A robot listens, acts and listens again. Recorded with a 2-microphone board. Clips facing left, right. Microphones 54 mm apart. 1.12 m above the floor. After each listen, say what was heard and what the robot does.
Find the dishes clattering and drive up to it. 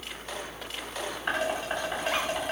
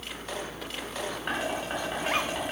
Turn 30° left.
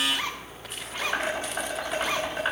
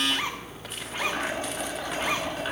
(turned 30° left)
So it is at 155° left. Turn 155° left.
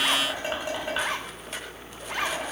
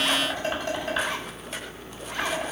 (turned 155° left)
The dishes clattering is now 15° left. Turn 15° left.
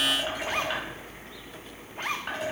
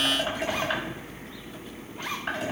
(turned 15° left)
Drive 1.0 m forward.
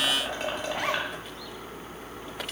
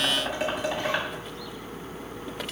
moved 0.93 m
Drive 1.0 m forward.
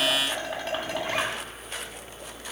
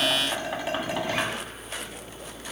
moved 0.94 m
The dishes clattering is now 10° right. Turn 10° right.
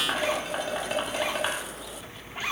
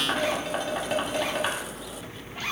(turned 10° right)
Drive 1.0 m forward.
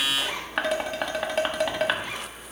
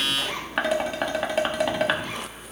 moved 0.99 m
Drive 1.0 m forward.
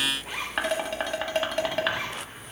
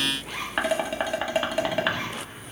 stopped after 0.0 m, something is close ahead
I am next to the dishes clattering.